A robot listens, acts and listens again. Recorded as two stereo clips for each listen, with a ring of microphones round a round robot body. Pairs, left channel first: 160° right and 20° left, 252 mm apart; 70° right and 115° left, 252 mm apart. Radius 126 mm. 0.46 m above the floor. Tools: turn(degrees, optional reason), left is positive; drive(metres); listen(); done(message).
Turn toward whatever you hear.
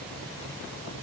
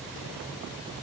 listen()
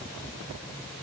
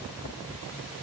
listen()
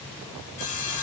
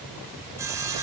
turn(degrees=-170, reason="The sawing: 170° right.")
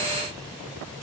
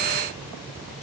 listen()
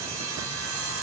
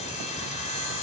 done("Found it: sawing, straight ahead, 2 to 4 m away.")